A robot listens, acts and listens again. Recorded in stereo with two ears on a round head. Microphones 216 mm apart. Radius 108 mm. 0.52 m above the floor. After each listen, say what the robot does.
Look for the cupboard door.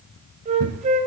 Turn 60° right.
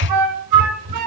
Turn 60° right.
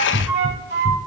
Turn 15° right.
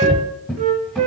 Found it: a cupboard door, straight ahead.